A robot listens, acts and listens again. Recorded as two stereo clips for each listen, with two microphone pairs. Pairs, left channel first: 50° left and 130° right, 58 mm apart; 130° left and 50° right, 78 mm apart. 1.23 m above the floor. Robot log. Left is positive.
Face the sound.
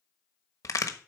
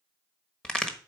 note: The crack: 50° left.
cmd yaw +50
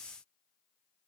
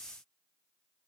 end: I heard a crack from this way, but can't make it out now.